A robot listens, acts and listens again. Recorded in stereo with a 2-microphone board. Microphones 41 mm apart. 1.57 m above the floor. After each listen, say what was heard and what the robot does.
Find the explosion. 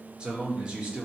Keep listening.
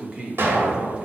The explosion: about 65° right or 115° right. Turn 65° right.
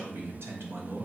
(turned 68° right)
Keep listening.
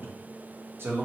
I heard an explosion, but can't make it out now. It was about 5° left or 45° right.